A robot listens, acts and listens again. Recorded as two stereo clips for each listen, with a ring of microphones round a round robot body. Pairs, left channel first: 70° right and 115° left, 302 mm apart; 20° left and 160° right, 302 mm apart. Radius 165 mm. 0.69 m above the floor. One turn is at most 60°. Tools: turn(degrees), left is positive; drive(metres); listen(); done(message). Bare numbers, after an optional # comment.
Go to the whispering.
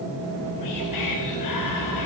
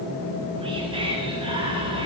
# The whispering: 85° right.
turn(-60)
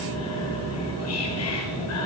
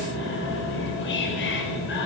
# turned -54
# The whispering is now 30° right.
turn(-30)
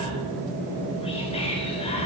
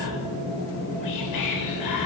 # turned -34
drive(1.0)
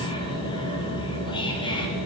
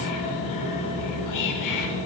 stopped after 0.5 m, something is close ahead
done("Something is in my way. I am facing the whispering but have not reached it.")